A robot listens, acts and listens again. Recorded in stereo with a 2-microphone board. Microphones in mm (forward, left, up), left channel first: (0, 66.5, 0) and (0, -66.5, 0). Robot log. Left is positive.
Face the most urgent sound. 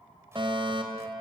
note: The fire alarm: about 40° right or 140° right.
cmd yaw -40
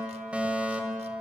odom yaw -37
note: So it is at 10° right.
cmd yaw -10
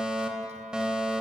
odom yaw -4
end: Found it: a fire alarm, straight ahead, 2 to 4 m away.